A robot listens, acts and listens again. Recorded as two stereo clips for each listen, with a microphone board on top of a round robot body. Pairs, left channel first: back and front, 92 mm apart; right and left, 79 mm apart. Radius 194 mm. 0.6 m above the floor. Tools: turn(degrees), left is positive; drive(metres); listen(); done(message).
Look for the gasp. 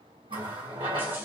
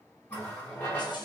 listen()
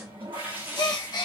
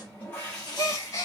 turn(degrees=-140)
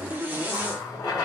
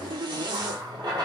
done("I heard a gasp from this way, but can't make it out now.")